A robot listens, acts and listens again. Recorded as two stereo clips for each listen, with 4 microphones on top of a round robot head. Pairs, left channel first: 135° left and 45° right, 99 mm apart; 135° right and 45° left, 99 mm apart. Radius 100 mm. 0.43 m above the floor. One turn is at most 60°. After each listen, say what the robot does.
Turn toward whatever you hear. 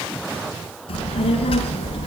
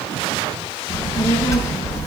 Turn 60° left.
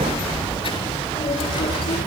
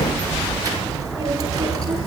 Turn 60° left.
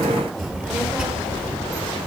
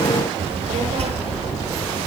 Turn 40° left.
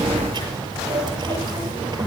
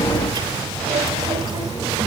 Facing the child speaking, over 4 m away.